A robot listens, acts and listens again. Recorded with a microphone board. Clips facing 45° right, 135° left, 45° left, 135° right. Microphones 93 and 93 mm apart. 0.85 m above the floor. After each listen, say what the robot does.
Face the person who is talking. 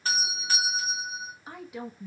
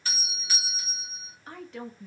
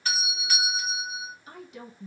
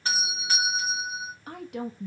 Turn 125° right.
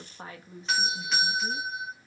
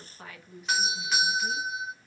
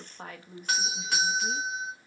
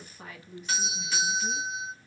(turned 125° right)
Turn 10° left.
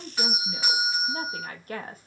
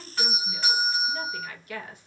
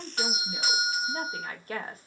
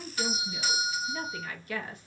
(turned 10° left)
Facing the woman speaking, under 1 m away.